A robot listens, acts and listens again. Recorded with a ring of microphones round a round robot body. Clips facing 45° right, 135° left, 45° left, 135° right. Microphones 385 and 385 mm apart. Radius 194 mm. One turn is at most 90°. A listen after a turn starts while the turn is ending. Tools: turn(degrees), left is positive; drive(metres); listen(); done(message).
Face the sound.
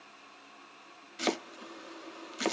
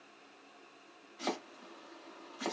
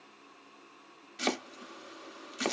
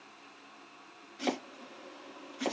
done("Facing the chopping.")